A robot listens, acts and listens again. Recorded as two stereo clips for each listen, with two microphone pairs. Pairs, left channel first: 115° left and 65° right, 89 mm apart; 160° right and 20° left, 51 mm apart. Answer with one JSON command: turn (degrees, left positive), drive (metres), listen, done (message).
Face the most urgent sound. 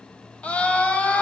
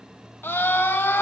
{"turn": -175}
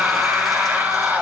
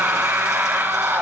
{"done": "Facing the scream, 1 to 2 m away."}